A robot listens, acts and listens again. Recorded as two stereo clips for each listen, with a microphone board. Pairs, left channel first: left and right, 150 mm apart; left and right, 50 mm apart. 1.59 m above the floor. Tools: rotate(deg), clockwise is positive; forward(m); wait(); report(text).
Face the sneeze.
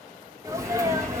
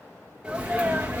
rotate(20)
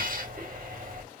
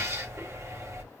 wait()
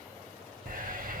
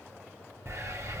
report("I heard a sneeze, but can't make it out now. It was about straight ahead or 140° right.")